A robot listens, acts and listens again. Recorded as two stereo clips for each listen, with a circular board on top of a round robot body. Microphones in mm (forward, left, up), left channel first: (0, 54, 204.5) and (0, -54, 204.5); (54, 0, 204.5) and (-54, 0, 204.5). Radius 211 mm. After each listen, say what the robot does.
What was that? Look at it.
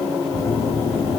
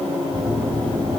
Turn 80° left.
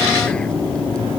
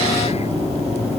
Turn 10° left.
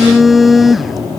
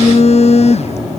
Found it: a phone buzzing, straight ahead.